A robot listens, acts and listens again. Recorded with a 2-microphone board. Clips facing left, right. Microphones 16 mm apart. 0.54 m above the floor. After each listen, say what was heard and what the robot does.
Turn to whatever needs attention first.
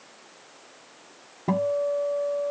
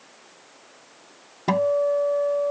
Keep listening.
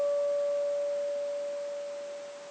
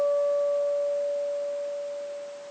Keep listening.
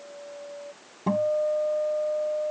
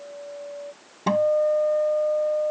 I can't make out anything urgent, only a guitar.